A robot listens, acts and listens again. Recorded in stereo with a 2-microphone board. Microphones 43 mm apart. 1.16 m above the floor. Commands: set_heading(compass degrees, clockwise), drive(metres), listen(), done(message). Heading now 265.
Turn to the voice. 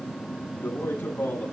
set_heading(195)
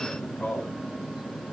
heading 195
set_heading(165)
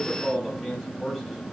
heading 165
done("Facing the man speaking.")